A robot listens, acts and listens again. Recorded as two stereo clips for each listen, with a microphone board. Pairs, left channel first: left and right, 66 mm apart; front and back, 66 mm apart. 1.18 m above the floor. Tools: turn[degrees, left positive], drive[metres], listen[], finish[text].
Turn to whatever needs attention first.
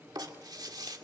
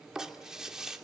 Action: listen[]
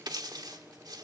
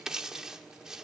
Action: listen[]
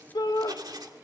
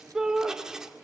Thought: The shout: 100° left.
Action: turn[100]
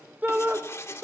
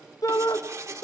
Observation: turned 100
Thought: The shout is now 25° right.
Action: turn[-25]
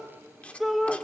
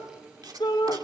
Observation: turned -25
Action: finish[Facing the shout.]